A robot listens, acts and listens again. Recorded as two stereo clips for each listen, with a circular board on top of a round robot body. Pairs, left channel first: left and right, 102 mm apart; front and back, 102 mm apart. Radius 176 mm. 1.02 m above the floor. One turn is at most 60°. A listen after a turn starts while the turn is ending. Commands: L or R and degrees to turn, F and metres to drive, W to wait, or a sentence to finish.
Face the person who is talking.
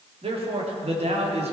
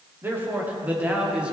R60
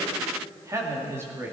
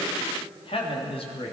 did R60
R20
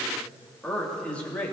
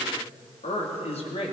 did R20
L15
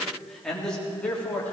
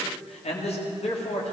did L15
L15
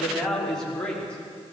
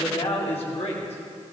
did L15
L10
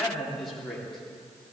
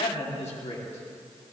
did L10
Facing the man speaking, 2 to 4 m away.